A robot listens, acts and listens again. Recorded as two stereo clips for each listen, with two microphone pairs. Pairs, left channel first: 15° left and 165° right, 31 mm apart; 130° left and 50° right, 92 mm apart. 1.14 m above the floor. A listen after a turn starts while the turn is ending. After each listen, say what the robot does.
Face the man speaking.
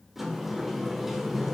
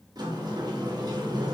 Keep listening.
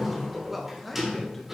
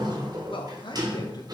Turn 105° left.
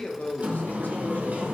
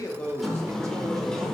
Keep listening.
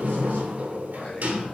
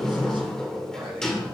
Turn 30° right.
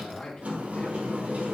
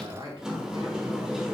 Turn 20° right.
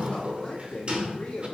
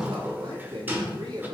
Turn 15° right.
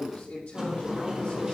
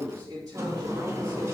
Facing the man speaking, 2 to 4 m away.